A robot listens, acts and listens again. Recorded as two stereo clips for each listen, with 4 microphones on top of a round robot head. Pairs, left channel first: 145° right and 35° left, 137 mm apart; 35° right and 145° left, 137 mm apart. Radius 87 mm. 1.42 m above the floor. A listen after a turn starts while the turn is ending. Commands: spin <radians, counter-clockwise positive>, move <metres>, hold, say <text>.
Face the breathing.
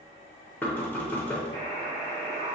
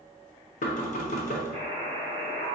hold
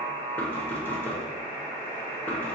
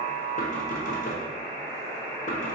hold
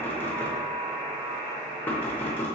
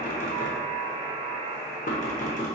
say I can't make out breathing to turn to.